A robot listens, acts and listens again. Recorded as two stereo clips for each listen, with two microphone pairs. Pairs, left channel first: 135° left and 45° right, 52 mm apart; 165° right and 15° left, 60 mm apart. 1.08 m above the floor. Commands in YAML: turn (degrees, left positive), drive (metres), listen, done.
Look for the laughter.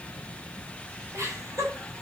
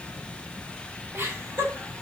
turn: -30
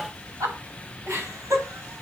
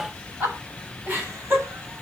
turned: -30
turn: -30
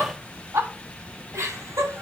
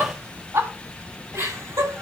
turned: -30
turn: -20
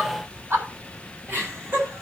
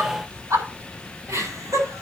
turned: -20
done: "Found it: laughter, straight ahead."